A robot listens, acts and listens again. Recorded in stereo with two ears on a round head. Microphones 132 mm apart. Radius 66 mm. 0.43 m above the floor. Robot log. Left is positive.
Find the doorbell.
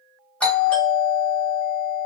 cmd yaw +30
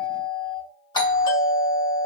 note: So it is at 140° left.
cmd yaw +140
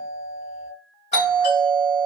note: The doorbell is now 60° left.
cmd yaw +60
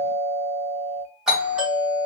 end: Found it: a doorbell, straight ahead.